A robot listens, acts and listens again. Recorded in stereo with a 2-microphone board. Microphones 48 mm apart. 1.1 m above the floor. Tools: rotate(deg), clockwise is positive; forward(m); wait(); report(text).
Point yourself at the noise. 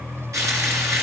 rotate(90)
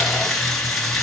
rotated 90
report("Facing the frying.")